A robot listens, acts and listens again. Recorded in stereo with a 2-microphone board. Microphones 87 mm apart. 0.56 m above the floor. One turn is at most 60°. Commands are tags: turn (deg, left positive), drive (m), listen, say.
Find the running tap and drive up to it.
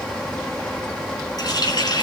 <turn deg="50"/>
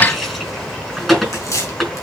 <drive m="1.0"/>
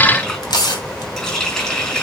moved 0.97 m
<turn deg="10"/>
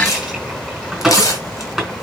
<drive m="1.0"/>
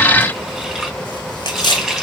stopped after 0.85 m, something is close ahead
<say>Something is in my way. I am facing the running tap but have not reached it.</say>